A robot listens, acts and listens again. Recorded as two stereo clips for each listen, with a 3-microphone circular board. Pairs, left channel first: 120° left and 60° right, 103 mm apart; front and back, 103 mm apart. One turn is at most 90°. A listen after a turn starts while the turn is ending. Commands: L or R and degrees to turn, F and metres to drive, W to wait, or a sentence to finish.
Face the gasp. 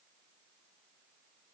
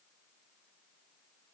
W
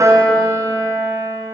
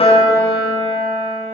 W
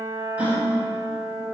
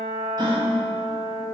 R90
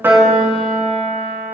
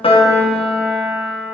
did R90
R45
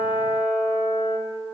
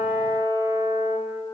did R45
I heard a gasp from this way, but can't make it out now.